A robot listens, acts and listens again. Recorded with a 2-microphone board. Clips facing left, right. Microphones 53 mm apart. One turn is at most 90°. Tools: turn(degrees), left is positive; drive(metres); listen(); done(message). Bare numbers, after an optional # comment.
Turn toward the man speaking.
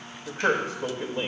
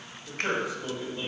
# The man speaking: about 55° left or 125° left.
turn(55)
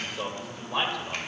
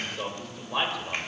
done("Found it: a man speaking, straight ahead.")